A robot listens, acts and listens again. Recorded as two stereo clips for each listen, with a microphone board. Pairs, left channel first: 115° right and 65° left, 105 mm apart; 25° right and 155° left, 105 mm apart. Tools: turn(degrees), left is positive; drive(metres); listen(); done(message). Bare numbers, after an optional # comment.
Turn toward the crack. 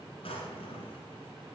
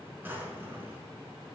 listen()
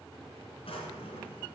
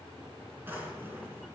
listen()
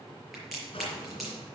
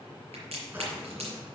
# The crack: 155° left.
turn(155)
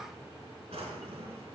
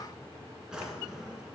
done("Facing where the crack came from. I can't hear it now.")